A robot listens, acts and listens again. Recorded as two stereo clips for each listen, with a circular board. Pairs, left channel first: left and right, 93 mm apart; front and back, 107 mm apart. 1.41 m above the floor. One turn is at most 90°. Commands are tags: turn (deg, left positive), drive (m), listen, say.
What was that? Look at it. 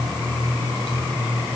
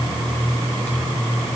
<listen/>
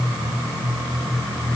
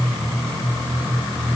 <listen/>
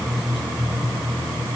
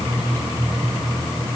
<say>I can't make out anything to turn to.</say>